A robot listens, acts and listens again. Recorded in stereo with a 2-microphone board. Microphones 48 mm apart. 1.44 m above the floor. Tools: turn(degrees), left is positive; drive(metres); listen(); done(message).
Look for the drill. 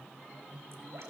listen()
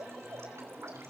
listen()
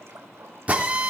turn(degrees=-30)
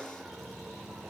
listen()
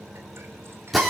done("Facing the drill, 2 to 4 m away.")